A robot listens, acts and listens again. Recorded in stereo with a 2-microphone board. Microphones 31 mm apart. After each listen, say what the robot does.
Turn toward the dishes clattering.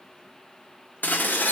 Turn 90° left.
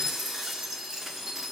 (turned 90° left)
Turn 10° right.
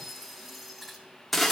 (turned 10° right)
Found it: dishes clattering, straight ahead.